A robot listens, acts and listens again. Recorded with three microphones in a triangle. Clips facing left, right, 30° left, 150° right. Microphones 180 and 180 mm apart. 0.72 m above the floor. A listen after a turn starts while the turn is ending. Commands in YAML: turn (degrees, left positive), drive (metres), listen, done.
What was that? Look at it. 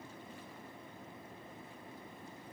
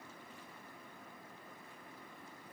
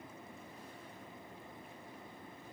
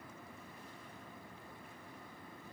listen: true
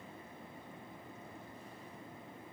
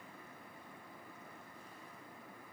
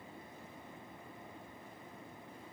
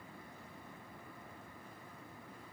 listen: true
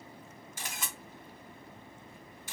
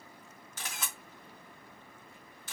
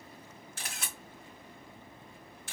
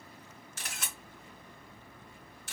turn: 15
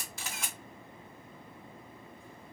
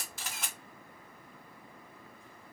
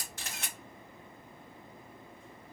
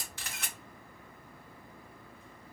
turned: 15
done: "Found it: a camera shutter, straight ahead, 1 to 2 m away."